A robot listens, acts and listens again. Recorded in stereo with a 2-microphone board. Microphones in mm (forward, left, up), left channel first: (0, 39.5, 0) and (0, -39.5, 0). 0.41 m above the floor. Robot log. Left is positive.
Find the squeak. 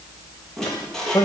cmd yaw +30
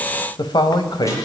cmd idle
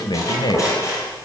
note: So it is at 145° left.
cmd yaw +145
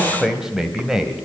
cmd idle
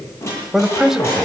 note: The squeak is now 35° left.
cmd yaw +35
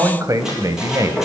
cmd idle
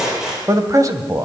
end: Found it: a squeak, straight ahead.